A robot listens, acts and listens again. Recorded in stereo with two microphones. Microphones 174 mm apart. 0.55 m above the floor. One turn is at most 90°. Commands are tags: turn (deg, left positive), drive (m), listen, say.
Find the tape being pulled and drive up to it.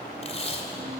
<turn deg="35"/>
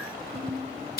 <turn deg="90"/>
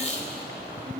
<turn deg="50"/>
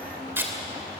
<turn deg="-15"/>
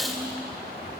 <drive m="1.0"/>
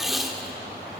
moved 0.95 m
<drive m="1.0"/>
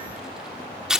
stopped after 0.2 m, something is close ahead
<say>I am next to the tape being pulled.</say>